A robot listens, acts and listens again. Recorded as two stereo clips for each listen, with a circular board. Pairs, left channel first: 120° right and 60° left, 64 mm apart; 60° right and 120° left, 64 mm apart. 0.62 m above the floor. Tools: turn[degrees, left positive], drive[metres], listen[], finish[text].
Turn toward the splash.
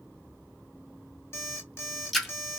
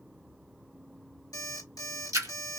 Thought: The splash: 150° left.
Action: turn[150]
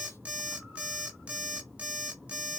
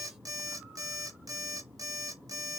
Action: finish[I heard a splash from this way, but can't make it out now.]